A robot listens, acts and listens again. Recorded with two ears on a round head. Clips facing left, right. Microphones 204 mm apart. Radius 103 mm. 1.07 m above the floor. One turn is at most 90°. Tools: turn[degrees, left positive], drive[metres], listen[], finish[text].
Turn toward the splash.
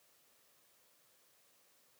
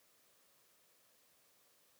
Action: listen[]
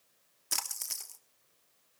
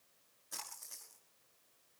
Action: turn[90]
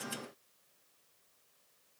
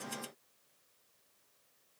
Action: finish[Facing where the splash came from. I can't hear it now.]